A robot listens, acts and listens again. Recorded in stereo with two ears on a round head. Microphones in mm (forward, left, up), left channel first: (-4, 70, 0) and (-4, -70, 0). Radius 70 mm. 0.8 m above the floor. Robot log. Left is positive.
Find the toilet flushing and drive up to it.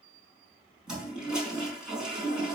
cmd yaw -30
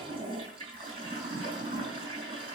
note: So it is at 145° right.
cmd yaw -145
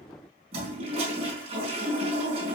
note: The toilet flushing is now 40° right.
cmd yaw -40
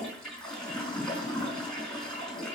cmd fwd 1.0
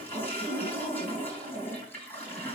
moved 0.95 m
note: The toilet flushing is now 15° left.
cmd yaw +15
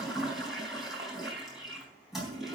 cmd fwd 1.0
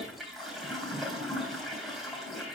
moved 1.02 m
cmd fwd 1.0
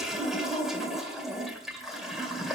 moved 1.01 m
cmd fwd 1.0
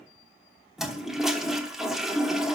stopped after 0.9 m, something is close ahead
end: I am next to the toilet flushing.